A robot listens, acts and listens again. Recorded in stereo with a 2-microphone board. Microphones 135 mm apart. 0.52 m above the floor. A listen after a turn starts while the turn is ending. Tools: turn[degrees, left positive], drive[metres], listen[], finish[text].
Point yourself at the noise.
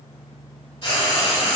Thought: The frying: about 45° left or 135° left.
Action: turn[45]
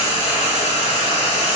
Thought: So it is at 80° left.
Action: turn[80]
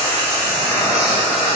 Action: finish[Facing the frying, 1 to 2 m away.]